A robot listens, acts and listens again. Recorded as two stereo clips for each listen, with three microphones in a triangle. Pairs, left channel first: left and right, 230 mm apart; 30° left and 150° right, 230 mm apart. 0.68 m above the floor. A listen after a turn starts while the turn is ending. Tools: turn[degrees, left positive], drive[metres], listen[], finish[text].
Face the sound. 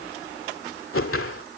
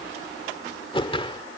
Thought: The whoosh: 95° left.
Action: turn[95]
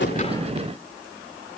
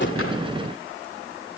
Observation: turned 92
Action: listen[]
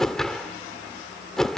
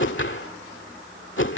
Action: finish[Found it: a whoosh, straight ahead.]